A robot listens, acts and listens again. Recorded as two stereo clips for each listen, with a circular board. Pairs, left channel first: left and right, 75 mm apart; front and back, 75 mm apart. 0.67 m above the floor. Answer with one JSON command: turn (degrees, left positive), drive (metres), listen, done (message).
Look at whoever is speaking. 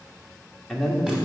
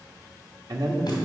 {"turn": 170}
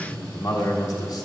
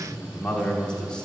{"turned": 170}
{"turn": 75}
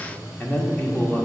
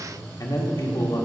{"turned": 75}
{"turn": 25}
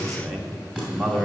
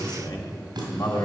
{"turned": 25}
{"done": "Found it: a man speaking, straight ahead."}